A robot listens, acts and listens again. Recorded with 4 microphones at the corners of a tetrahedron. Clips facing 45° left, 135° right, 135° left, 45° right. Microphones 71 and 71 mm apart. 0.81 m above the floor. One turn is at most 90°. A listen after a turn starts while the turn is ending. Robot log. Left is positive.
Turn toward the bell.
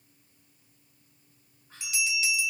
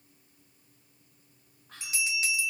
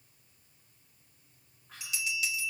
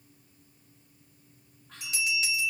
note: The bell: 95° right.
cmd yaw -90
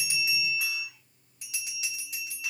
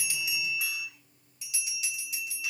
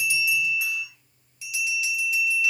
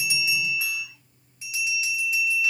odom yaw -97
end: Facing the bell, 2 to 4 m away.